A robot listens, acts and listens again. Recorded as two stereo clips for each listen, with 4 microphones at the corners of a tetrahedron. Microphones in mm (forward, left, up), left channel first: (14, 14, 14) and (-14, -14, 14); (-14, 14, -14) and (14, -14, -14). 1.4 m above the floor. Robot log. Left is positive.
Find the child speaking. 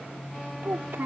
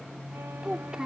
note: The child speaking: 120° right.
cmd yaw -120
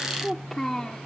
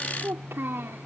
note: The child speaking is now 30° right.
cmd yaw -30
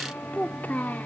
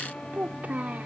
end: Found it: a child speaking, straight ahead.